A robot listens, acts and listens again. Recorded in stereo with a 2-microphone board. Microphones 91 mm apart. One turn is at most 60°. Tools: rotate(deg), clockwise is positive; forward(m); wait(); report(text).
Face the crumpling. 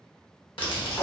rotate(-60)
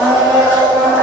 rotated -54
rotate(-35)
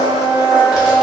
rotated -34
wait()
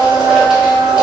report("I heard crumpling from this way, but can't make it out now.")